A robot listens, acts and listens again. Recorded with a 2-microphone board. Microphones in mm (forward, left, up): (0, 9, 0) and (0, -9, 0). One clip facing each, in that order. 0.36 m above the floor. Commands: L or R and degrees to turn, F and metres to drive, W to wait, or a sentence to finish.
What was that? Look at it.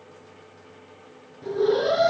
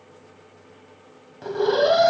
R65
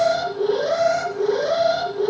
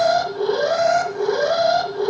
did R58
R35
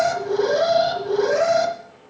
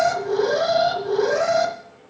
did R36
Found it: an alarm, straight ahead, 1 to 2 m away.